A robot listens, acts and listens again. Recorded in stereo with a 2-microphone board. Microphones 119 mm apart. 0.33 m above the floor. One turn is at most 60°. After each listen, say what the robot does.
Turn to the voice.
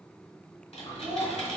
Turn 25° right.
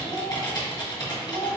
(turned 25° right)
Turn 60° right.
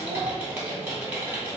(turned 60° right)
Turn 60° right.
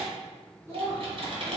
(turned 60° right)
Turn 25° right.
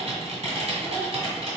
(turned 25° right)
Keep listening.
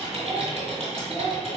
Turn 15° right.
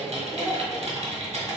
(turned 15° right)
Keep listening.
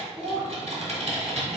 Turn 10° right.
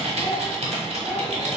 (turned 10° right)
Found it: a child speaking, straight ahead.